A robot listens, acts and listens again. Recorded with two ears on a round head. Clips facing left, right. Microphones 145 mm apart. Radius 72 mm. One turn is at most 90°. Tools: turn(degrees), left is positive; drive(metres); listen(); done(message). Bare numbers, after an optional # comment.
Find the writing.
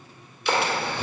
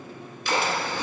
# The writing: about 50° left or 130° left.
turn(50)
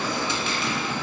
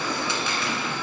# So it is at 70° left.
turn(70)
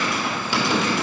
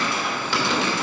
# The writing is now 15° left.
turn(15)
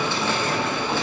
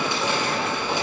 done("Facing the writing, 2 to 4 m away.")